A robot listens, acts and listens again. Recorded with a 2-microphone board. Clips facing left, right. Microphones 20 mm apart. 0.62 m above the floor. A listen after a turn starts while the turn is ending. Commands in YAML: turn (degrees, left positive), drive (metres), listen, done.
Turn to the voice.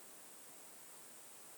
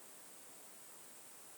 listen: true
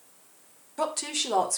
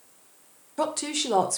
turn: -30
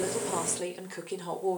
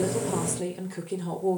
turn: 25
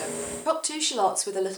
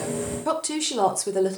turn: 10
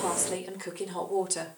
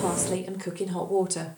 done: "Found it: a woman speaking, straight ahead."